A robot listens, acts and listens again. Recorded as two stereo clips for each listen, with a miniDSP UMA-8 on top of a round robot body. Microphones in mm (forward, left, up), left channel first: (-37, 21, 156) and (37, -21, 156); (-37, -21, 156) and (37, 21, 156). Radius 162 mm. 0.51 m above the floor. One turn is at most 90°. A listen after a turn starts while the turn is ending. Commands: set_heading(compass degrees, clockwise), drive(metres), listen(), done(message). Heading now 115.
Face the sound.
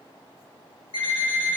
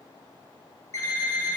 set_heading(25)
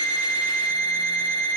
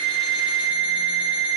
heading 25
set_heading(295)
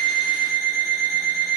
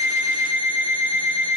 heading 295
set_heading(270)
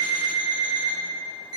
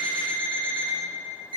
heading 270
done("Facing the alarm clock, 2 to 4 m away.")